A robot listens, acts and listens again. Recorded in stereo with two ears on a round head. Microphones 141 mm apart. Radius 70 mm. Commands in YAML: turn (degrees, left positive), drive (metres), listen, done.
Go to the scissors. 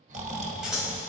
turn: -30
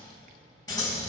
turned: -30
turn: 25
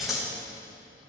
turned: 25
drive: 1.0
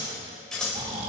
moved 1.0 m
drive: 1.0
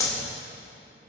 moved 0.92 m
turn: 20
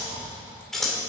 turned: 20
drive: 1.0
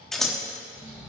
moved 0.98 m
drive: 1.0
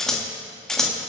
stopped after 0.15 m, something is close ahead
done: "Arrived at the scissors, straight ahead."